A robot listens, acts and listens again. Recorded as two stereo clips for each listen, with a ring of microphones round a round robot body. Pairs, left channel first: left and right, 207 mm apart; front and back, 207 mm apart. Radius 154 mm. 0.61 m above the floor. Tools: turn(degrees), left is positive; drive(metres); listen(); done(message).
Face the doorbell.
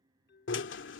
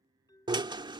turn(degrees=70)
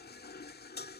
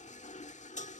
listen()
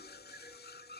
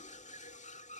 listen()
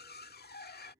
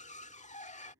done("Facing where the doorbell came from. I can't hear it now.")